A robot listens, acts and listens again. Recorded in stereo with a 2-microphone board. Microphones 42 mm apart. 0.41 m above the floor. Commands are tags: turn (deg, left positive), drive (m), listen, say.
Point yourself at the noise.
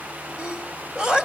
<turn deg="-15"/>
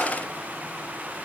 <listen/>
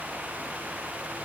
<say>I heard a sneeze, but can't make it out now. It was about straight ahead or 150° right.</say>